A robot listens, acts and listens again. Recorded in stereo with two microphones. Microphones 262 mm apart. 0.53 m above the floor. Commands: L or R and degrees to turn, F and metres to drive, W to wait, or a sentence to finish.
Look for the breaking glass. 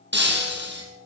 R40
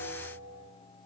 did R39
W
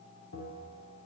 I heard breaking glass, but can't make it out now. It was about 5° right or 100° right.